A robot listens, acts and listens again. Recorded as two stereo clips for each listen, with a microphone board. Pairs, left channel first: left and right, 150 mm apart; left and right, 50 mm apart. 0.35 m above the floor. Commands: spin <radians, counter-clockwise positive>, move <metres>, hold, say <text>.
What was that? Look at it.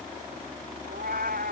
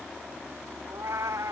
spin -1.31
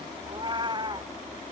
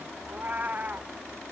spin -0.52
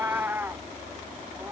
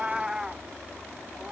spin -0.26
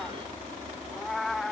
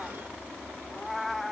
say Facing the cat meowing.